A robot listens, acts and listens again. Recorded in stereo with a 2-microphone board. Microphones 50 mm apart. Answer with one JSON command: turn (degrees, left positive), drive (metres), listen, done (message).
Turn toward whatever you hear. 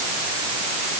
{"listen": true}
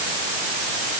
{"listen": true}
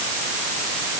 {"done": "I can't make out anything to turn to."}